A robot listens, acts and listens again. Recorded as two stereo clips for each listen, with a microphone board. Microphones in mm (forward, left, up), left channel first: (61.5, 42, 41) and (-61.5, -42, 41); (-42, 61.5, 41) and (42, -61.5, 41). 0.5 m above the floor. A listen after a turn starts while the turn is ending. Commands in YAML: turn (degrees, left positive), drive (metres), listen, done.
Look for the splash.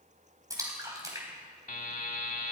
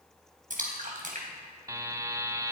turn: -80
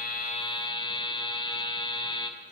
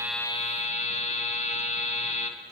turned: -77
done: "Facing where the splash came from. I can't hear it now."